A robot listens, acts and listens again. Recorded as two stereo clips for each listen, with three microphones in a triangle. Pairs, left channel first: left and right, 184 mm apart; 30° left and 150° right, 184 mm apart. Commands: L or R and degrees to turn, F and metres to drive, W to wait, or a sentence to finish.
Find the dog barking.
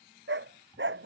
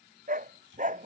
R100
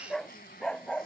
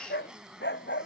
L10
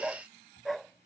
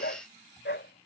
Facing the dog barking.